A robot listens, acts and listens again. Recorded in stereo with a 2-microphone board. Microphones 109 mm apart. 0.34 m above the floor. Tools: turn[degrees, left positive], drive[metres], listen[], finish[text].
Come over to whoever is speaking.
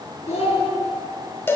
Action: turn[90]
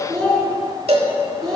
Action: drive[1.0]
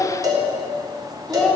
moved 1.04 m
Action: drive[1.0]
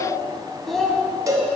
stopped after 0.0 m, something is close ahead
Action: finish[Arrived at the child speaking, straight ahead.]